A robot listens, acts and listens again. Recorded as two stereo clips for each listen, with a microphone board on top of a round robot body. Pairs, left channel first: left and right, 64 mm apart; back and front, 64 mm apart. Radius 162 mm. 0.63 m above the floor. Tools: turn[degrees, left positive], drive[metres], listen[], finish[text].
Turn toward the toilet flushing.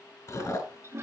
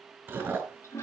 Thought: The toilet flushing: 140° right.
Action: turn[-140]
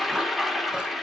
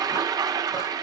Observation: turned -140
Action: finish[Facing the toilet flushing, 1 to 2 m away.]